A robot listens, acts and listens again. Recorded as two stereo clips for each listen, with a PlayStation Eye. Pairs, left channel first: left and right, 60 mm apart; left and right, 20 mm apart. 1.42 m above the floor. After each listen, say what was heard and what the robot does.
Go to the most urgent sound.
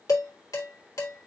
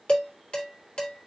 Keep listening.
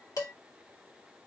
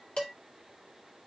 Keep listening.
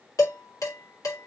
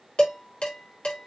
I can't make out anything urgent, only dishes clattering.